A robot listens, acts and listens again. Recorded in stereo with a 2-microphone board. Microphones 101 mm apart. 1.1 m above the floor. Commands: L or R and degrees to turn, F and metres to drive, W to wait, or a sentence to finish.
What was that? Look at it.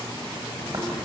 R45
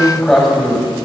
Found it: tearing paper, straight ahead.